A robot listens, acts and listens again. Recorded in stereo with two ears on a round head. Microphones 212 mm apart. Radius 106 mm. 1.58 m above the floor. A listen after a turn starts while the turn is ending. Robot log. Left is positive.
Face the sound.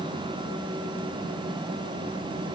cmd idle
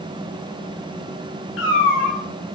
note: The cat meowing: about 55° left or 125° left.
cmd yaw +55
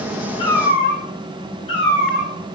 note: So it is at 25° left.
cmd yaw +25
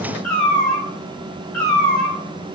end: Found it: a cat meowing, straight ahead, 2 to 4 m away.